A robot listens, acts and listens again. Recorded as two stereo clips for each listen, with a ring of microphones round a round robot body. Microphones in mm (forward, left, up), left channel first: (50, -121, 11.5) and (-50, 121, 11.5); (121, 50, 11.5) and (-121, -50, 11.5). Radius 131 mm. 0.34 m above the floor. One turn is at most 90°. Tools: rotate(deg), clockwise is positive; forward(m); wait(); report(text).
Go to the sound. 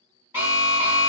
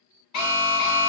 rotate(-30)
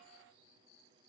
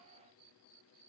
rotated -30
wait()
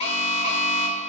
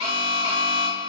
forward(1.0)
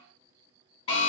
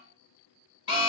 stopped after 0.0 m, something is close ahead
report("Something is in my way. I am facing the alarm but have not reached it.")